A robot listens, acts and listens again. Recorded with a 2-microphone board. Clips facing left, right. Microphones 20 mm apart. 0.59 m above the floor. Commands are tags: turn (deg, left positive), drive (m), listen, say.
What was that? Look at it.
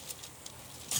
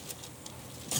<listen/>
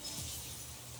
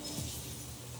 <listen/>
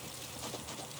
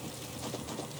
<say>I can't make out anything.</say>